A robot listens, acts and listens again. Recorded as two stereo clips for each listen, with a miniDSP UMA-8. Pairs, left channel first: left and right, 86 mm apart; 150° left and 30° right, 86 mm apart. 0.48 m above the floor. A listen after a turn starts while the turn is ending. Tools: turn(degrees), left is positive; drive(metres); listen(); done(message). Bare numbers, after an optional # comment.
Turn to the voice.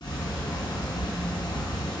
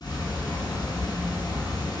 listen()
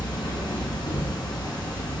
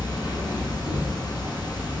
listen()
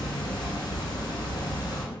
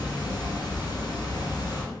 done("I can't make out anyone speaking to turn to.")